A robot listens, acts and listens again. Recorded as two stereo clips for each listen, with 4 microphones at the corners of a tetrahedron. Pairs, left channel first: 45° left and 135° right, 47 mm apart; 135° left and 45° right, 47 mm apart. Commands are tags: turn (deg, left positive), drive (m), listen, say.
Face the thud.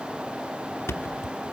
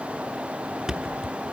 <turn deg="30"/>
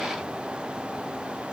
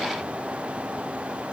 <say>I heard a thud from this way, but can't make it out now.</say>